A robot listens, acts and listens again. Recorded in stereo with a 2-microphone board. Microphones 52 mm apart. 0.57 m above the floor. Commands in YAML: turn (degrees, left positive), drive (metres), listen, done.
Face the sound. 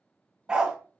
turn: -30
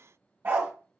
turn: -140
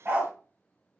turn: -40
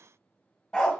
turn: 10
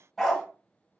done: "Facing the dog barking, 1 to 2 m away."